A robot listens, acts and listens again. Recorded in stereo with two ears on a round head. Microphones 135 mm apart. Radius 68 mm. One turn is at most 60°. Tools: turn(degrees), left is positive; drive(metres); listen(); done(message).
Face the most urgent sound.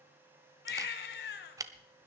turn(degrees=60)
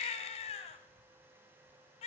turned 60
turn(degrees=40)
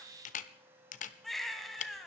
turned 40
done("Facing the baby crying.")